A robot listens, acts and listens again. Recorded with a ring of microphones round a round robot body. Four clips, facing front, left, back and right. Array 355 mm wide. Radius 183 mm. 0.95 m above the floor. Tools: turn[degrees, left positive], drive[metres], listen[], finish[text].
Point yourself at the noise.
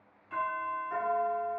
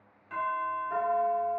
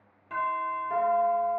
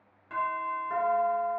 Thought: The doorbell: 150° right.
Action: turn[-150]
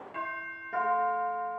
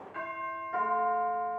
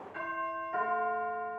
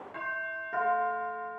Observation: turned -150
Thought: The doorbell is now 35° right.
Action: turn[-35]
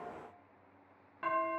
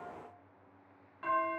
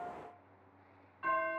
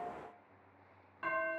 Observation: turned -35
Action: finish[Facing the doorbell.]